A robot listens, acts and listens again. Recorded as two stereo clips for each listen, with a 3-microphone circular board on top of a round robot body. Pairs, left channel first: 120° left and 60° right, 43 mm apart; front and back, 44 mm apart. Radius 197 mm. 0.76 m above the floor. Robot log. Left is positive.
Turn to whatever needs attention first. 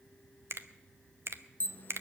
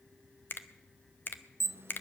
note: The alarm: 165° left.
cmd yaw +165
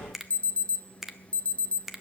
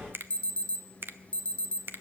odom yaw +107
note: The alarm is now 60° left.
cmd yaw +60
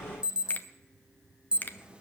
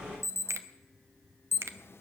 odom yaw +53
end: Found it: an alarm, straight ahead.